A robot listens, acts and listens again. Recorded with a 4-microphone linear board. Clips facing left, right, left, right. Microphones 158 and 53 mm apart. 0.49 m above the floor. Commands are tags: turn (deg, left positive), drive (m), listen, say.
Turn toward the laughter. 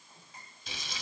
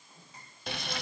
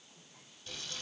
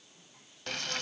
<listen/>
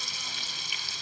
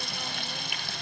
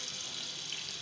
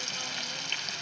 <listen/>
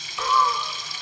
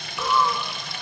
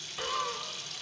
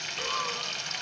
<turn deg="-30"/>
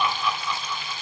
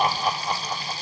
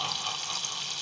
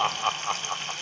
<turn deg="-125"/>
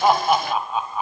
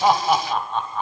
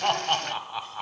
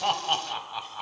<turn deg="10"/>
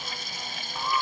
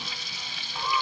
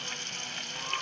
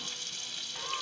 <say>Found it: laughter, straight ahead, 2 to 4 m away.</say>